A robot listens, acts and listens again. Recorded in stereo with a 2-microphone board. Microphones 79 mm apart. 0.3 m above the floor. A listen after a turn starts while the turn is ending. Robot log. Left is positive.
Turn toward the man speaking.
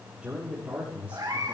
cmd yaw -30
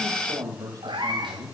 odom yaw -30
note: So it is at 130° right.
cmd yaw -130
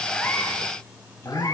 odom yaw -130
note: The man speaking is now 35° left.
cmd yaw +35
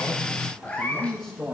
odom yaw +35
end: Facing the man speaking, over 4 m away.